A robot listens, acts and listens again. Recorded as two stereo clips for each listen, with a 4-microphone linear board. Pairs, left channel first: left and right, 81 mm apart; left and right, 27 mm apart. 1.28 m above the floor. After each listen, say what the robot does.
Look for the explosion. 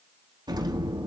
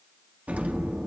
Turn 65° right.
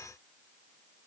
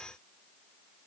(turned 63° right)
Keep listening.
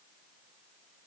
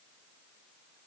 I heard an explosion, but can't make it out now. It was about straight ahead or 55° right.